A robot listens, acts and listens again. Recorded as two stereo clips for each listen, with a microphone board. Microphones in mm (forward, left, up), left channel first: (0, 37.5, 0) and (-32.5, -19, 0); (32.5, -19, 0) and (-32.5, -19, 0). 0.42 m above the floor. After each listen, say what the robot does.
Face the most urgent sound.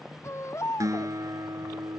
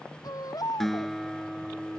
Turn 15° left.
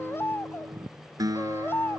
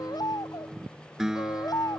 Facing the baby crying.